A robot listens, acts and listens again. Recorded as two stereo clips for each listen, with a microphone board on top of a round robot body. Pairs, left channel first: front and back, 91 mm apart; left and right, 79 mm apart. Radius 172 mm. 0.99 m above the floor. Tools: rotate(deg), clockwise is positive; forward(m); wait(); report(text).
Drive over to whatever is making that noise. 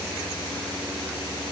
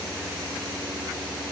wait()
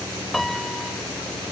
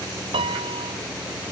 rotate(90)
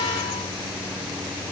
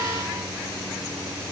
wait()
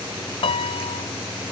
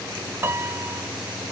rotate(25)
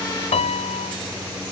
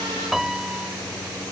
forward(1.0)
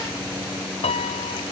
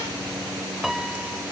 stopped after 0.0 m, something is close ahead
report("Something is in my way. I am facing the piano but have not reached it.")